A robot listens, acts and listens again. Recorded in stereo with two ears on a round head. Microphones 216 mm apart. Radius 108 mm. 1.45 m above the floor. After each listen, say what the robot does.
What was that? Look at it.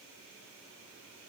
Keep listening.
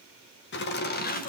Turn 35° left.
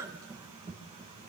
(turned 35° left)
Turn 25° right.
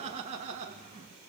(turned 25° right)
Turn 35° right.
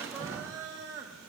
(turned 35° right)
Turn 15° right.
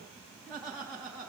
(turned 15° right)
Found it: laughter, straight ahead, 2 to 4 m away.